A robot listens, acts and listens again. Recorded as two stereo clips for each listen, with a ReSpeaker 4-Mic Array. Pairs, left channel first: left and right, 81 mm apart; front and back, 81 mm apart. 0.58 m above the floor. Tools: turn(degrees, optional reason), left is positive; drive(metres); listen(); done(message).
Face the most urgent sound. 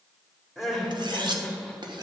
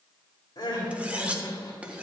done("Found it: crying, straight ahead.")